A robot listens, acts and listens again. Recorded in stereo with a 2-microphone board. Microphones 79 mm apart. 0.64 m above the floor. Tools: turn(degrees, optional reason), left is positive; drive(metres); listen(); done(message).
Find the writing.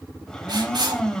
turn(degrees=-90)
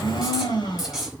done("Facing the writing, over 4 m away.")